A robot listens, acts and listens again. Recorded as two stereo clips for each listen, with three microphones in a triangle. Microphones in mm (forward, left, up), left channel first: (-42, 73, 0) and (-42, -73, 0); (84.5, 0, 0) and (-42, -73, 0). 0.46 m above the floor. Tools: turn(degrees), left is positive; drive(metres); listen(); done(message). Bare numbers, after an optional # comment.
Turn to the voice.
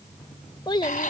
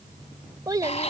# The child speaking: 150° left.
turn(150)
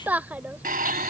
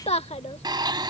# The child speaking is now 15° right.
turn(-15)
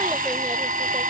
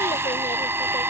listen()
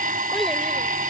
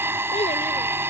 listen()
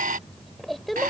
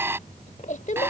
done("Found it: a child speaking, straight ahead.")